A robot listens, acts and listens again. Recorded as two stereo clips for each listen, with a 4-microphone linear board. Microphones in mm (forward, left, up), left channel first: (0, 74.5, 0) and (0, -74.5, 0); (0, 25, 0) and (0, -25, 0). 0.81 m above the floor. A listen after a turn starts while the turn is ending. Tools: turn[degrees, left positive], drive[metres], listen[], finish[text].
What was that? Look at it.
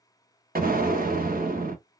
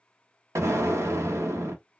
Thought: The explosion: about 70° right or 110° right.
Action: turn[-70]
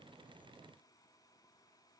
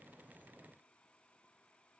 Action: listen[]
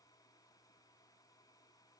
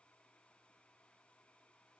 Action: finish[I heard an explosion, but can't make it out now. It was about straight ahead or 40° right.]